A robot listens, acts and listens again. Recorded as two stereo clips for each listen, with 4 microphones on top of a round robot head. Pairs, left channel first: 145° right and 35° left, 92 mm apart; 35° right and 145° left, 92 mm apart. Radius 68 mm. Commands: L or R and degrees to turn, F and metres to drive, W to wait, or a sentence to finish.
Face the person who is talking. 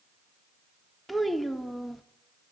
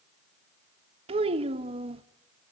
L125
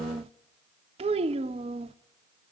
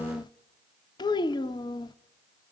L15
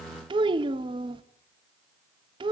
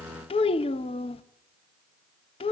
Found it: a child speaking, straight ahead, 1 to 2 m away.